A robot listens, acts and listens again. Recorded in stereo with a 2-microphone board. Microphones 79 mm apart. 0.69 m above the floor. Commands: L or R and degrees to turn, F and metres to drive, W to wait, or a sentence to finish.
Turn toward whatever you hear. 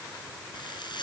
L90
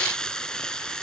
L10
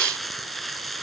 Found it: frying, straight ahead.